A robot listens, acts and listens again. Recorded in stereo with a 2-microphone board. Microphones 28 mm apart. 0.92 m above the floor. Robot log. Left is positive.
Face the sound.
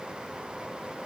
cmd idle
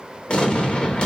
note: The explosion: about 40° left or 140° left.
cmd yaw +40
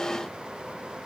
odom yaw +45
cmd idle
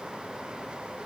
end: I heard an explosion, but can't make it out now. It was about 5° right or 95° left.